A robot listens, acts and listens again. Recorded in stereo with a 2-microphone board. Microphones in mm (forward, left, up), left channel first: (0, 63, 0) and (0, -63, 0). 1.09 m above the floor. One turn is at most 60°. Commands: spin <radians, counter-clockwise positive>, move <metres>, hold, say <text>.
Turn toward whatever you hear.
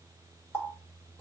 spin 0.26
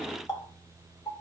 spin 1.05
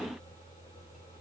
spin 1.05
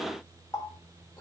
spin 0.44
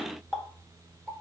say Facing the running tap, 1 to 2 m away.